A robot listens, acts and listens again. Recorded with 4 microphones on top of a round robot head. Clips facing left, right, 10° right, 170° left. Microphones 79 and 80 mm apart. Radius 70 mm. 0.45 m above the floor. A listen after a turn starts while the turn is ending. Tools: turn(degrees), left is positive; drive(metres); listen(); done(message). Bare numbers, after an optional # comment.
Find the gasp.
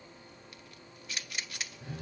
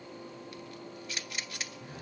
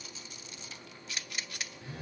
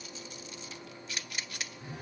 listen()
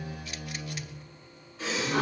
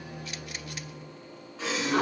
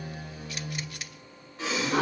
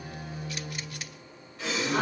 # The gasp: 70° right.
turn(-70)
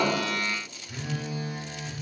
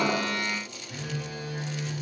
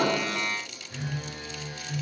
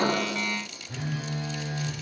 done("Facing where the gasp came from. I can't hear it now.")